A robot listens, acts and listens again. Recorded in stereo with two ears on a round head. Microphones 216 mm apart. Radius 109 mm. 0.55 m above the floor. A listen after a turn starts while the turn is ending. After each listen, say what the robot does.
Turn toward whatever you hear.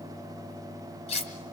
Turn 25° left.
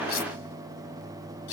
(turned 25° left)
Turn 125° left.
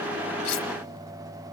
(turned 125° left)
Keep listening.
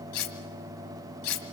Turn 60° left.
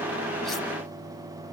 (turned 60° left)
Keep listening.
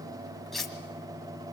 Facing the cutlery clinking.